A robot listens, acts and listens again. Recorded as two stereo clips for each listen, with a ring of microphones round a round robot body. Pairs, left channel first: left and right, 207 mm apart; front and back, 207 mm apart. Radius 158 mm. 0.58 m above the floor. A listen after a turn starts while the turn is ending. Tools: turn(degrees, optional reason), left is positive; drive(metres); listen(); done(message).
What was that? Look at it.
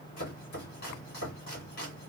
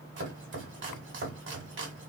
turn(degrees=150, reason="The chopping: 150° left.")
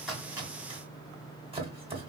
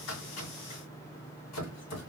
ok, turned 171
turn(degrees=-25, reason="The chopping is now 25° right.")
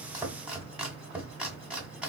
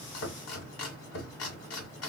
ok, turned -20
done("Facing the chopping.")